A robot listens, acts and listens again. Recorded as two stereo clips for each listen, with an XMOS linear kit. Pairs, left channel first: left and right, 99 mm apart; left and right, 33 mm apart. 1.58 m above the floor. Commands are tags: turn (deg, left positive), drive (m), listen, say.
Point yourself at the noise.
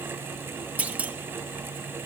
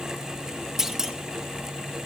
<turn deg="-30"/>
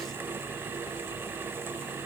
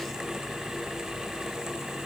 <listen/>
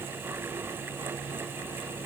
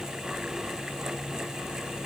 <say>I heard a clunk, but can't make it out now. It was about 15° left or 135° right.</say>